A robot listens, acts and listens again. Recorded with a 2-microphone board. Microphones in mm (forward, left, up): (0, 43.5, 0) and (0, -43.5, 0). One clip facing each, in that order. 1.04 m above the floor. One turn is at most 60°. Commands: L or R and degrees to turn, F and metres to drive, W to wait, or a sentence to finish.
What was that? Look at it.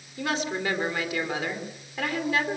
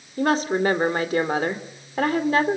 R40
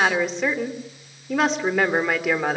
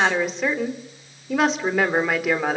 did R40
Facing the woman speaking, 2 to 4 m away.